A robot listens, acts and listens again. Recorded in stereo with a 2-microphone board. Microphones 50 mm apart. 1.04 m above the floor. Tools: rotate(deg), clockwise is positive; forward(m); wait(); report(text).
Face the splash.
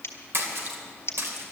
rotate(60)
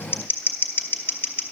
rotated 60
wait()
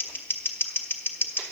report("I heard a splash, but can't make it out now. It was about straight ahead or 60° right.")